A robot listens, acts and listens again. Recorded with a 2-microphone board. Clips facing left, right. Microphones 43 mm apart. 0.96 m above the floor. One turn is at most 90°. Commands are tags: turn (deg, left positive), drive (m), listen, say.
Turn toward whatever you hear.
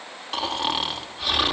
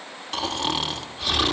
<turn deg="30"/>
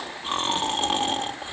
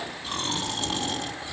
<turn deg="90"/>
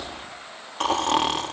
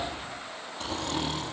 <turn deg="70"/>
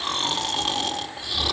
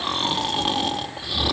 <turn deg="-10"/>
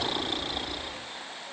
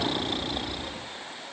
<say>Found it: snoring, straight ahead.</say>